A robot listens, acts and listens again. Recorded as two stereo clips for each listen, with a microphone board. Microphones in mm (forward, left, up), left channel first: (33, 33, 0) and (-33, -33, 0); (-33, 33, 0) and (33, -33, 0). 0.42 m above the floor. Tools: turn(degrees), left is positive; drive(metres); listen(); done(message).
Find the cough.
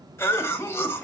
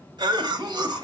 turn(degrees=-15)
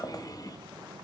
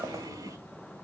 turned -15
done("Found it: a cough, straight ahead.")